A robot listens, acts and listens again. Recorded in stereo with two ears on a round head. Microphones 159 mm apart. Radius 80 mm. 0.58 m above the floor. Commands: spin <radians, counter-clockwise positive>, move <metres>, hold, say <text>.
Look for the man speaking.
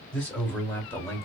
spin 0.52
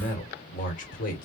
spin 2.27
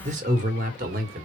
spin -0.96
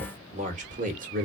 spin -0.87
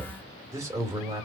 spin -0.35
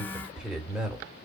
say Facing the man speaking, 1 to 2 m away.